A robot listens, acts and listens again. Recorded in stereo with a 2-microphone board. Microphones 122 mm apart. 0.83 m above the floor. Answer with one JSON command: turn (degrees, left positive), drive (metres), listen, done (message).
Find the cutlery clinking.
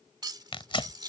{"turn": -35}
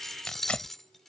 {"done": "Facing the cutlery clinking."}